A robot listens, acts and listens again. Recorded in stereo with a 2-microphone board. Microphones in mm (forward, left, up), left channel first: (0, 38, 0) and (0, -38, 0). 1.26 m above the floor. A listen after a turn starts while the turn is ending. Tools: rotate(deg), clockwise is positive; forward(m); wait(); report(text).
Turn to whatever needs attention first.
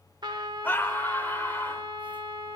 rotate(-25)
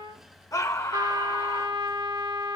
rotate(-130)
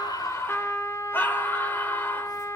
rotate(-30)
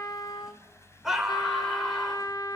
report("Found it: a scream, straight ahead.")